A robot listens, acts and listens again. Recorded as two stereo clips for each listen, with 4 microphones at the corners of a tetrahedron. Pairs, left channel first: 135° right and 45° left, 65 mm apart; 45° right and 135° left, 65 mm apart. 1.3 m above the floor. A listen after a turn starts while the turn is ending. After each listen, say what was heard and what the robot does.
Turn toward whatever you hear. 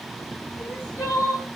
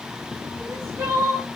The crying: 175° right. Turn 175° right.
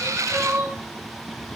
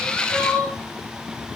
The crying is now 35° left. Turn 35° left.
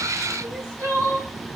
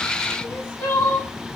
Facing the crying, 2 to 4 m away.